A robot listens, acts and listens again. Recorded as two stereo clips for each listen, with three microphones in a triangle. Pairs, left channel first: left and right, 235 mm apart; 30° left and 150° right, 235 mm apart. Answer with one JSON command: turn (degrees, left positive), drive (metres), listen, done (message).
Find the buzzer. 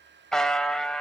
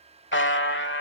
{"done": "Facing the buzzer, 1 to 2 m away."}